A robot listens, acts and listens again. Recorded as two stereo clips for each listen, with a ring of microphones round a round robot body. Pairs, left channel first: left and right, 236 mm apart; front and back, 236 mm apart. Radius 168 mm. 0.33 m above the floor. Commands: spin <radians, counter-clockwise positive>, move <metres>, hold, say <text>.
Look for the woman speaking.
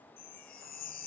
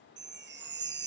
hold
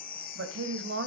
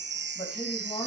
spin -1.13
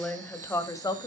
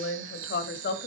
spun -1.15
spin 0.35
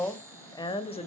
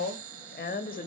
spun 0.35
spin 0.61
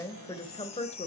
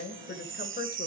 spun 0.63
spin 0.61
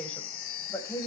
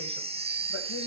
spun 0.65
spin 0.26
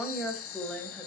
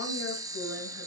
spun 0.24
say Found it: a woman speaking, straight ahead, 2 to 4 m away.